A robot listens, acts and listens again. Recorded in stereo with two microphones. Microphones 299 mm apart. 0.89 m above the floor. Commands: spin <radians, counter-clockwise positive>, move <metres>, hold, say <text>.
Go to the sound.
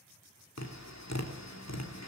spin 1.13
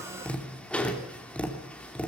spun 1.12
move 1.0
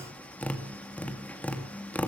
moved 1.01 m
move 1.0
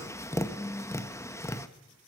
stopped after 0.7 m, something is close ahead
spin 0.26
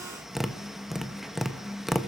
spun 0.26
say I am next to the tapping.